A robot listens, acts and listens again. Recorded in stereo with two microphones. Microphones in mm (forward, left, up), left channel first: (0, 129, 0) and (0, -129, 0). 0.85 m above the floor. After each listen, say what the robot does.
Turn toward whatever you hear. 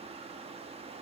Keep listening.
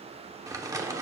Turn 30° right.
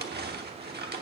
Turn 135° right.
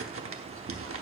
Turn 65° right.
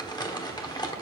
Turn 15° left.
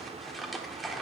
Found it: crumpling, straight ahead, under 1 m away.